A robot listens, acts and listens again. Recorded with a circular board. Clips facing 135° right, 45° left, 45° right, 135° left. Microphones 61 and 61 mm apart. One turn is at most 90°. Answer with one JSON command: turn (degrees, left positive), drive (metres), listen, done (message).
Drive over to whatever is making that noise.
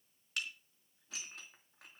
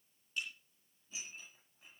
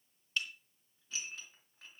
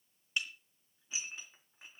{"turn": -90}
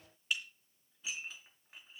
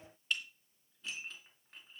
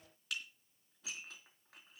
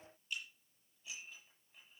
{"turn": -50}
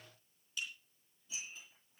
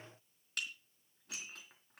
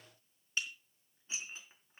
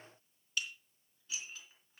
{"turn": 20}
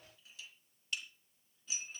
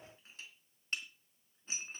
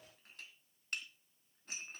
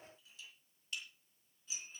{"drive": 1.0}
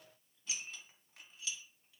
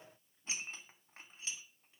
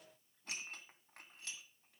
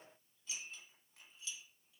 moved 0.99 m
{"turn": -10}
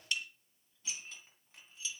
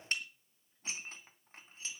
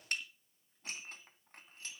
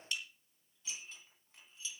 {"drive": 1.0}
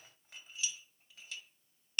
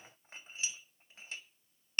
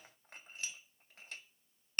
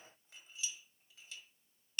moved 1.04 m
{"turn": -10}
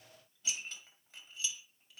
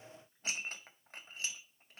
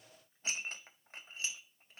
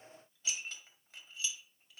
{"drive": 1.0}
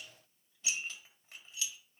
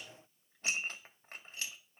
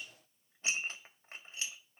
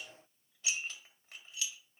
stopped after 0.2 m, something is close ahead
{"done": "I am next to the dishes clattering."}